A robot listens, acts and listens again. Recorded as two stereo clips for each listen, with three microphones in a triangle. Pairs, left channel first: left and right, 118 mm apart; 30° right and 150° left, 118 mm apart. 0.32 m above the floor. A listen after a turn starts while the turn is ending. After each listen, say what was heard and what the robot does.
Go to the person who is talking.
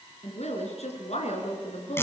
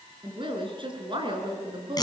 The woman speaking: 105° left. Turn 105° left.
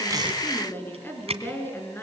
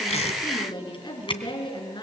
The woman speaking is now 20° left. Turn 20° left.
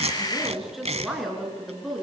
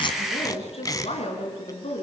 Drive 1.0 m forward.
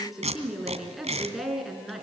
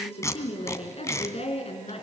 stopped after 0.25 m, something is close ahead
Something is in my way. I am facing the woman speaking but have not reached it.